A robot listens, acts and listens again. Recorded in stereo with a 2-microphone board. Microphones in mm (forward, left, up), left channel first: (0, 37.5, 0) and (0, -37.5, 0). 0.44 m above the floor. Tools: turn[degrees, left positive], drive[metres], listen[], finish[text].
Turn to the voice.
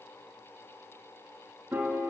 Action: listen[]
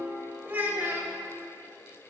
Thought: The child speaking: about 25° right or 155° right.
Action: turn[-25]
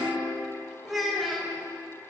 Action: finish[Found it: a child speaking, straight ahead, 1 to 2 m away.]